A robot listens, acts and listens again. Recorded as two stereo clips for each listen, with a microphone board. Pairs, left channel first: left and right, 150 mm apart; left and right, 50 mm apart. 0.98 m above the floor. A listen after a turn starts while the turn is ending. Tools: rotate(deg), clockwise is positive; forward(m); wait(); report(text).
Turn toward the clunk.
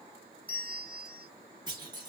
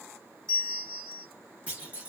rotate(25)
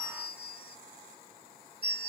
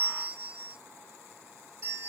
wait()
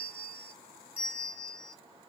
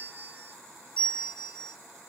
report("I heard a clunk, but can't make it out now. It was about straight ahead or 130° right.")